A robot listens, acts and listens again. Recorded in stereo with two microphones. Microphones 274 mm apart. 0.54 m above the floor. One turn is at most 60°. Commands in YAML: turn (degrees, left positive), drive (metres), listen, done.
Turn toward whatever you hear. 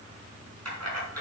turn: -60
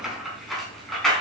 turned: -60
done: "Facing the keys jangling."